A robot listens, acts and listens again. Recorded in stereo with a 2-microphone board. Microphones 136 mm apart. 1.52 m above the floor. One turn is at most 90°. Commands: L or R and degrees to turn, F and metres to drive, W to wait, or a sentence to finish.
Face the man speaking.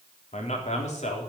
L55
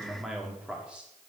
R10
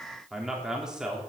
Found it: a man speaking, straight ahead, 2 to 4 m away.